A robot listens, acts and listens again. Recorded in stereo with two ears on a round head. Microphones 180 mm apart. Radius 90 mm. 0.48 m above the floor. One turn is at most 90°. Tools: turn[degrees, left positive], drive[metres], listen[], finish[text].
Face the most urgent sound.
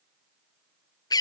Action: listen[]
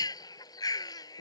Action: listen[]
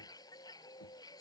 Action: finish[I can't make out anything urgent to turn to.]